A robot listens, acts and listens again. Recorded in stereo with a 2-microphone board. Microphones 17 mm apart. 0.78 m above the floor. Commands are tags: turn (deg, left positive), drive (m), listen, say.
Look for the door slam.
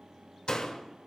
<turn deg="90"/>
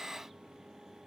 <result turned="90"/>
<say>I heard a door slam from this way, but can't make it out now.</say>